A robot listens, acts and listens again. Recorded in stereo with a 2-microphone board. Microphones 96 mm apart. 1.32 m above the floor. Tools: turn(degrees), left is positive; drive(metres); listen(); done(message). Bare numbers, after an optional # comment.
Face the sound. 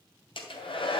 # The hair dryer: about 70° left or 110° left.
turn(70)
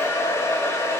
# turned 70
# So it is at 30° left.
turn(30)
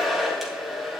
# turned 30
done("Found it: a hair dryer, straight ahead, 2 to 4 m away.")